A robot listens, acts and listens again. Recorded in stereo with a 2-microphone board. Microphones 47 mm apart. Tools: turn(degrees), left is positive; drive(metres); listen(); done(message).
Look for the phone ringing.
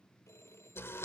turn(degrees=90)
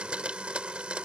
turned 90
listen()
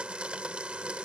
listen()
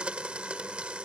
done("I heard a phone ringing from this way, but can't make it out now.")